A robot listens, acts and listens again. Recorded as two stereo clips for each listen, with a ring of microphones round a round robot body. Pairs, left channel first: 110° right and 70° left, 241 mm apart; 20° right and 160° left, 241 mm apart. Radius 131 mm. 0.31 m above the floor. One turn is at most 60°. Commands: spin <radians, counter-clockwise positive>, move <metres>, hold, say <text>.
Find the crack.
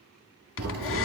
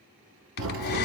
spin 1.05
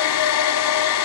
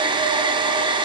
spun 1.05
spin 1.05
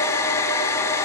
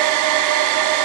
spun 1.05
say Facing where the crack came from. I can't hear it now.